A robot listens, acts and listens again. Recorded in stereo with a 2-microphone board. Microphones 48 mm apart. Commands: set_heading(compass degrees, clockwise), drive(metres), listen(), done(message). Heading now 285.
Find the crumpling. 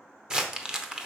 set_heading(300)
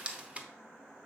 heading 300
set_heading(90)
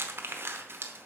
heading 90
set_heading(155)
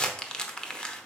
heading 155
set_heading(135)
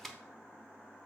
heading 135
set_heading(125)
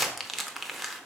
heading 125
done("Facing the crumpling, under 1 m away.")